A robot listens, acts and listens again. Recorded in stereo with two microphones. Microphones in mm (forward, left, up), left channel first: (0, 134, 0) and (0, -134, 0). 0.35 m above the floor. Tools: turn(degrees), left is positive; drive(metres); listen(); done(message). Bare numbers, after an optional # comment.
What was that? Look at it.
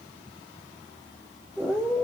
turn(30)
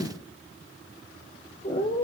# So it is at 150° left.
turn(150)
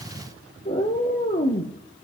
# The cat meowing is now 35° left.
turn(35)
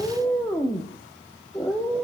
done("Facing the cat meowing, 1 to 2 m away.")